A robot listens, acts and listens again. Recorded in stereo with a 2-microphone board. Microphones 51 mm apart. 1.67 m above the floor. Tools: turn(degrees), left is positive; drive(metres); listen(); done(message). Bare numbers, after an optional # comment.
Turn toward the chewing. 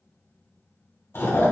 # The chewing: about 55° left or 125° left.
turn(55)
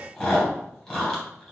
# So it is at 15° left.
turn(15)
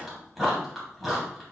done("Facing the chewing.")